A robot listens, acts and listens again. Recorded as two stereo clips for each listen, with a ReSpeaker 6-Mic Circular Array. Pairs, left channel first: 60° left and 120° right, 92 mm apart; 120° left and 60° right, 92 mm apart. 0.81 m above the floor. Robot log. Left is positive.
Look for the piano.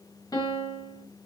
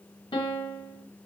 note: The piano: 105° left.
cmd yaw +105
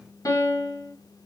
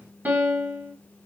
note: The piano is now 10° left.
cmd yaw +10
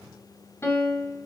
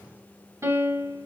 end: Found it: a piano, straight ahead.